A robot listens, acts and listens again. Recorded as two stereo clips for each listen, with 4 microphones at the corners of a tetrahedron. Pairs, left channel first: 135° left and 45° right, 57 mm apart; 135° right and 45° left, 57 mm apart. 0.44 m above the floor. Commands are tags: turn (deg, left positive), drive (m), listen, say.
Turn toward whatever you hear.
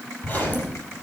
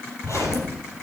<turn deg="-165"/>
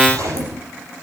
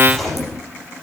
<turn deg="-50"/>
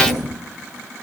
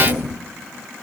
<turn deg="-15"/>
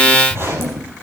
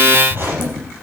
<say>Found it: a zipper, straight ahead.</say>